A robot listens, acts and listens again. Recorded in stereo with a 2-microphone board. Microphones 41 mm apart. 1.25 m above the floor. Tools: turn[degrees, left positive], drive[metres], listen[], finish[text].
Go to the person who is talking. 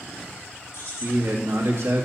Action: turn[-90]
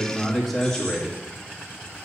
Action: drive[1.0]
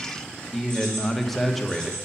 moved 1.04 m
Action: drive[1.0]
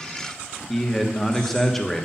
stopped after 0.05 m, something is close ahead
Action: finish[I am next to the man speaking.]